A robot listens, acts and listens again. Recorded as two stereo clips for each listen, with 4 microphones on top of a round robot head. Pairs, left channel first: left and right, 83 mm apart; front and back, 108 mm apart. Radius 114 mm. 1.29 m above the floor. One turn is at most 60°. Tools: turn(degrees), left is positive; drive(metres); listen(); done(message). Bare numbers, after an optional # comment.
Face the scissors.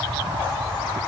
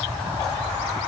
listen()
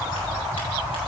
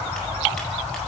listen()
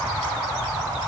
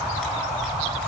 done("I can't make out scissors to turn to.")